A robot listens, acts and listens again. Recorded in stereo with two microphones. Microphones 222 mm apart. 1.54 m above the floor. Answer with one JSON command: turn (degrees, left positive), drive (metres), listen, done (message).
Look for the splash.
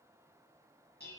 {"listen": true}
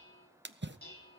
{"turn": -55}
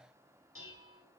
{"listen": true}
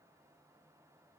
{"done": "I heard a splash, but can't make it out now. It was about straight ahead or 70° right."}